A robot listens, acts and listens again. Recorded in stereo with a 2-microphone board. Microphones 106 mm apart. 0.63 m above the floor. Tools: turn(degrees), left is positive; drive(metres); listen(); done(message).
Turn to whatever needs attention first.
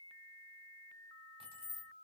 listen()
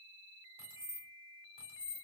listen()
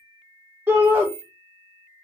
turn(degrees=-20)
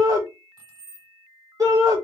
turn(degrees=-140)
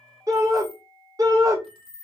turn(degrees=-40)
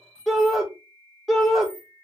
done("Found it: a shout, straight ahead, 1 to 2 m away.")